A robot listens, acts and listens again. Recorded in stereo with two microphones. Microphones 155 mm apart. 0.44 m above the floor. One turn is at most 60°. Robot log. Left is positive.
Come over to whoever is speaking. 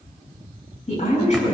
note: The woman speaking: about 45° left or 135° left.
cmd yaw +45
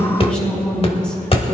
note: So it is at 10° left.
cmd yaw +10
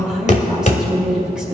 cmd fwd 1.0
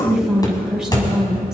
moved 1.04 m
cmd fwd 1.0
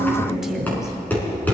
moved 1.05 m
cmd fwd 1.0
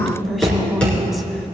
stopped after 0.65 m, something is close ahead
end: I am next to the woman speaking.